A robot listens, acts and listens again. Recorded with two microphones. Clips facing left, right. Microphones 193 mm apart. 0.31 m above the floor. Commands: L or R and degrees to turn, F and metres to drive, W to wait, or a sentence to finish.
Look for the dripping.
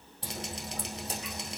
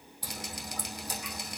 L25
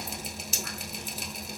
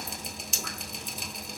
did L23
Found it: dripping, straight ahead.